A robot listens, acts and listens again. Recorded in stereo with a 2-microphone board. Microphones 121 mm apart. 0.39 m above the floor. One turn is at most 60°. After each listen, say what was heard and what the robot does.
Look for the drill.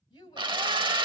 The drill: about 40° right or 140° right. Turn 40° right.
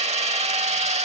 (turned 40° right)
So it is at 90° right. Turn 60° right.
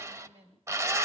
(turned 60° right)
The drill is now 30° right. Turn 30° right.
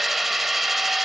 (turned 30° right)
Found it: a drill, straight ahead.